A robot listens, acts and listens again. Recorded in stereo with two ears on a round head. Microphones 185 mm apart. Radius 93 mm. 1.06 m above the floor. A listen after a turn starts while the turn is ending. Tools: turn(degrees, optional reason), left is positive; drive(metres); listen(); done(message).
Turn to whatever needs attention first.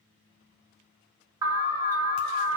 turn(degrees=-15, reason="The alarm: about 15° right or 165° right.")
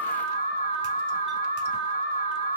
turn(degrees=-150, reason="So it is at 150° right.")
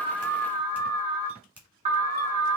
turn(degrees=-40, reason="The alarm is now 40° right.")
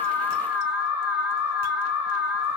done("Found it: an alarm, straight ahead.")